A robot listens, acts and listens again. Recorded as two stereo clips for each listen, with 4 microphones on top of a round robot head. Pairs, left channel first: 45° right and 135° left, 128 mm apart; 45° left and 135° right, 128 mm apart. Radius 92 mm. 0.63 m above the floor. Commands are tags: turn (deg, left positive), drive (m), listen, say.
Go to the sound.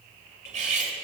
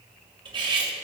<turn deg="170"/>
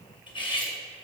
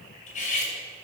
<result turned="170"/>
<turn deg="10"/>
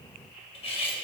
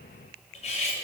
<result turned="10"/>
<drive m="1.0"/>
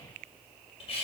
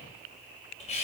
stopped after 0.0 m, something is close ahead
<say>Something is in my way. I am facing the cutlery clinking but have not reached it.</say>